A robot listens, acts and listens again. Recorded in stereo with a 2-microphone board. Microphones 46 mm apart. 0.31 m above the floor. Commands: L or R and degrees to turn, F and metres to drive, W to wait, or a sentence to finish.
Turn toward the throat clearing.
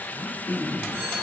L50
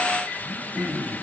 Facing the throat clearing, 2 to 4 m away.